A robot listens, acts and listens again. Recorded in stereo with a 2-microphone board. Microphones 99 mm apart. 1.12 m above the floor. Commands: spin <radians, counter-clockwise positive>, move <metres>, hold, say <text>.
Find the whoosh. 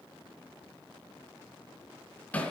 hold
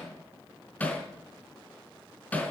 hold
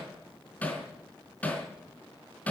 say I can't make out a whoosh, only hammering.